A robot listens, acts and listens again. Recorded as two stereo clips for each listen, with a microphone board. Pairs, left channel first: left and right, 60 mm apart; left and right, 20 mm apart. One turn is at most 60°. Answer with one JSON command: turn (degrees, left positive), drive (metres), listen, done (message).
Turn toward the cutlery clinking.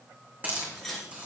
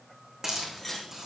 {"turn": 30}
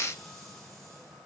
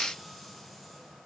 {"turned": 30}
{"listen": true}
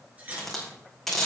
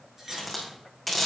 {"turn": -25}
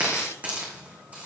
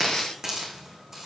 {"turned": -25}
{"listen": true}
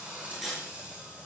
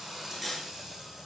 {"done": "Found it: cutlery clinking, straight ahead, 2 to 4 m away."}